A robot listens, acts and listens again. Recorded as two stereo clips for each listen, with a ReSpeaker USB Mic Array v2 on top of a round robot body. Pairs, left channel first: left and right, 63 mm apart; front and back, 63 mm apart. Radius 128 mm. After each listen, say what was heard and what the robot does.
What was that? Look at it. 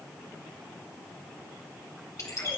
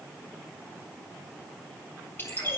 The bird: 55° left. Turn 55° left.
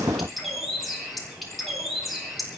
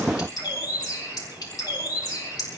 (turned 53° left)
Facing the bird.